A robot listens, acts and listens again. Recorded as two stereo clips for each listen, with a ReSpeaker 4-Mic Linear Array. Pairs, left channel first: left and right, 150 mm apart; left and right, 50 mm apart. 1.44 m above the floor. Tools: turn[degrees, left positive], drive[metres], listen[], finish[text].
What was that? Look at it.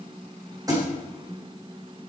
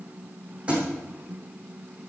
Thought: The thud: about 25° right or 155° right.
Action: turn[-25]
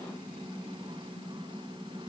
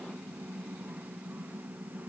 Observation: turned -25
Action: listen[]
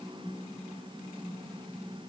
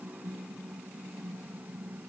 Action: finish[I heard a thud, but can't make it out now. It was about straight ahead or 130° right.]